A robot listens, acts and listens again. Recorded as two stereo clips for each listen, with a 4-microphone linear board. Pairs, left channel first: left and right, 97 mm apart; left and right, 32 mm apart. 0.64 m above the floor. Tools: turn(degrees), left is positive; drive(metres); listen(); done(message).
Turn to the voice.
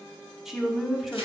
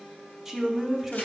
turn(degrees=-30)
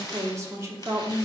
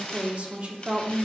turn(degrees=-145)
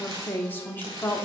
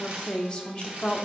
turn(degrees=25)
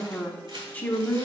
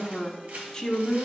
turn(degrees=20)
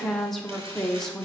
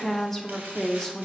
done("Facing the woman speaking.")